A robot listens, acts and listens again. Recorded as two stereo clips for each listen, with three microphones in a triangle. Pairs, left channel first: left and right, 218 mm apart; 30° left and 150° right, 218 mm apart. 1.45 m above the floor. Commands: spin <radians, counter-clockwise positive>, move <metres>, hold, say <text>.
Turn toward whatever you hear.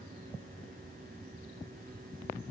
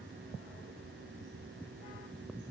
hold
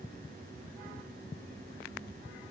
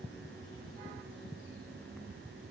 hold
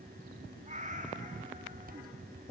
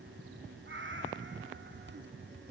spin -2.44
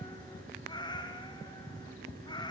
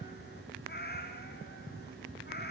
spin 0.52
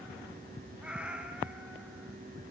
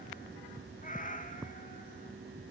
say Facing the cat meowing, 1 to 2 m away.